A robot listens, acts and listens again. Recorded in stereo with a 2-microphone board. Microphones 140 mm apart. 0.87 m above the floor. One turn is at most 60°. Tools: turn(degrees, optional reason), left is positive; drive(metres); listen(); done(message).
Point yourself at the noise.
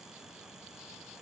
listen()
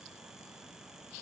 listen()
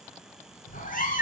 turn(degrees=60, reason="The cat meowing: about 75° left or 105° left.")
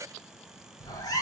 turn(degrees=25, reason="So it is at 25° left.")
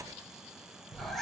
done("Facing the cat meowing.")